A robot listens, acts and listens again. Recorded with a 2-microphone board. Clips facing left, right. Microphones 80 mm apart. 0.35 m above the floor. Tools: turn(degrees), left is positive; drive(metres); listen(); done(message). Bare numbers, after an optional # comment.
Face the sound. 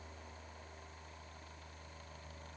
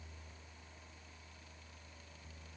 listen()
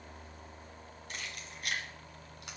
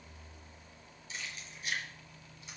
# The keys jangling: about 65° left or 115° left.
turn(65)
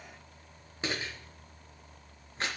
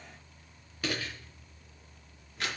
# So it is at 35° left.
turn(35)
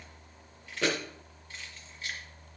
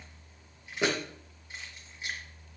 # The keys jangling is now 15° right.
turn(-15)
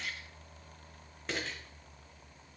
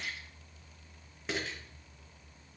done("Found it: keys jangling, straight ahead.")